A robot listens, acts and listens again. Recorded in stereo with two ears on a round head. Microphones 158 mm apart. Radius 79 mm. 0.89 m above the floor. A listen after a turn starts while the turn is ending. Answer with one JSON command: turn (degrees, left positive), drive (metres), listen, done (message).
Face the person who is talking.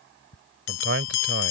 {"turn": -70}
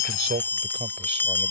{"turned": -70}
{"listen": true}
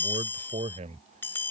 {"turn": -35}
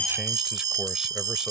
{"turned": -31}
{"listen": true}
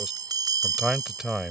{"done": "Found it: a man speaking, straight ahead."}